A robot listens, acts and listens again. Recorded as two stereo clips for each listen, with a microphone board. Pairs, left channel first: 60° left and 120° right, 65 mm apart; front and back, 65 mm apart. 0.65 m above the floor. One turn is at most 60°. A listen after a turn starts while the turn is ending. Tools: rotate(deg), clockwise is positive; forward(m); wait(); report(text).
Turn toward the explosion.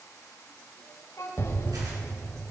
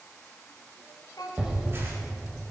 rotate(-60)
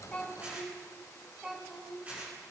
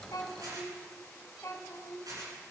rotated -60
rotate(-45)
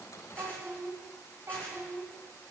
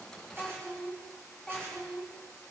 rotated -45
report("I heard an explosion from this way, but can't make it out now.")